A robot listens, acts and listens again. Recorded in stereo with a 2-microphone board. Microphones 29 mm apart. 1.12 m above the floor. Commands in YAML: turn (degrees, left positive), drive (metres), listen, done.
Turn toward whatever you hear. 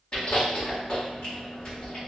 turn: 30
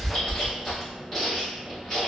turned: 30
done: "Facing the chewing."